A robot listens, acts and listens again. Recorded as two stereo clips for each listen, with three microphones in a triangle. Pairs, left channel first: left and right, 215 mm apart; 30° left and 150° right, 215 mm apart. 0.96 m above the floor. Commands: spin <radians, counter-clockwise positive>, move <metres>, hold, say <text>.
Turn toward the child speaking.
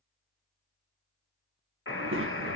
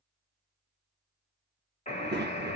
spin -1.92
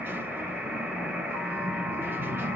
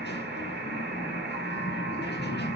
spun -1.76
spin -0.17
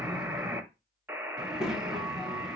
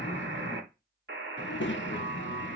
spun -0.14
say Found it: a child speaking, straight ahead, under 1 m away.